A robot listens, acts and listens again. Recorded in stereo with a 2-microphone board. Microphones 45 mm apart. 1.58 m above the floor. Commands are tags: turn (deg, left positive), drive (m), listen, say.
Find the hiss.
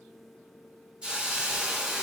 <turn deg="-20"/>
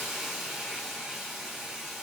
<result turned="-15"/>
<say>Facing the hiss.</say>